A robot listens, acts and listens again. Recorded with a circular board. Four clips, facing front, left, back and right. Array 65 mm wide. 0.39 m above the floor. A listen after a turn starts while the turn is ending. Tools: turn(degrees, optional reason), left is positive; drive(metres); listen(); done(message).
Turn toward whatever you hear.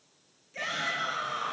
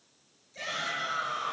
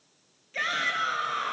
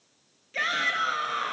turn(degrees=-120, reason="The shout: 120° right.")
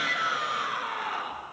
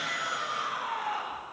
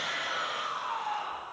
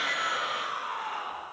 done("Found it: a shout, straight ahead.")